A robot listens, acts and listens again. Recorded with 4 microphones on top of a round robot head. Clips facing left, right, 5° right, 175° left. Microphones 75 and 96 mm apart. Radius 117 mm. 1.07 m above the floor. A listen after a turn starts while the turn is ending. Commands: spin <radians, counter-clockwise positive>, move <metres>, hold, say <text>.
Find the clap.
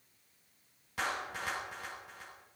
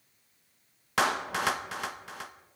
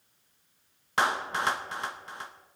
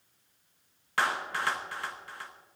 spin -1.31
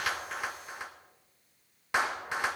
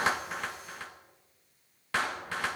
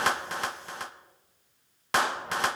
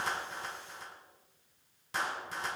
spin 0.26
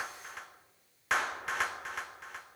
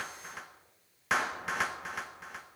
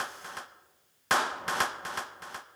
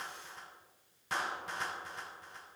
say Found it: a clap, straight ahead.